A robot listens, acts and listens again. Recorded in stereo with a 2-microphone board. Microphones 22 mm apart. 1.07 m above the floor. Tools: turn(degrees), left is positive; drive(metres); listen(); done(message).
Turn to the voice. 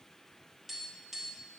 listen()
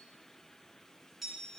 listen()
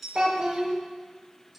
turn(degrees=-40)
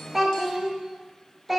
done("Found it: a child speaking, straight ahead, 1 to 2 m away.")